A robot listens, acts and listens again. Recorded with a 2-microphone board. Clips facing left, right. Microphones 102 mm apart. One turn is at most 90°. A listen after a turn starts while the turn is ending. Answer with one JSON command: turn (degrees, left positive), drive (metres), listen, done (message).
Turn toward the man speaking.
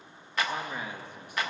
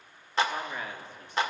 {"turn": 15}
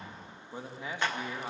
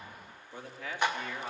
{"turn": 15}
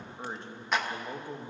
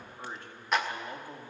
{"turn": 20}
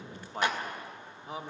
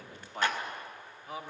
{"turn": 25}
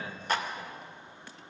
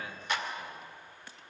{"listen": true}
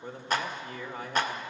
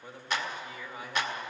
{"turn": 90}
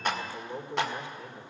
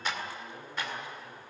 {"turn": 85}
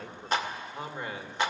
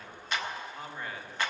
{"turn": 20}
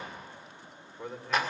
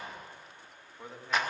{"done": "Facing the man speaking, 2 to 4 m away."}